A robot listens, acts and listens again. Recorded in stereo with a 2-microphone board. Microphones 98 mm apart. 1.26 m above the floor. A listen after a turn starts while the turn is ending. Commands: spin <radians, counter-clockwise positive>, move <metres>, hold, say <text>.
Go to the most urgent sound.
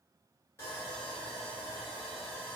hold
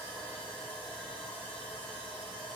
hold
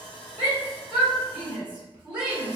spin -0.52
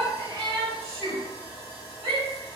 spin -2.36
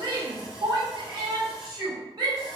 spin -0.79
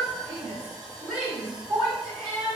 move 1.0
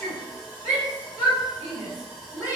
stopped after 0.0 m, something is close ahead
say Something is in my way. I am facing the shout but have not reached it.